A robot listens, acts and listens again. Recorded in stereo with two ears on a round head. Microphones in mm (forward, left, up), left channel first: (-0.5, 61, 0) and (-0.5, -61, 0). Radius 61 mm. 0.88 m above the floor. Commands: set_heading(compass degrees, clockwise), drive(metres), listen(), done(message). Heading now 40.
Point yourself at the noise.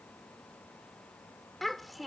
set_heading(10)
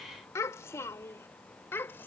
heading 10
set_heading(205)
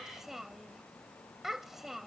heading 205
done("Found it: a child speaking, straight ahead.")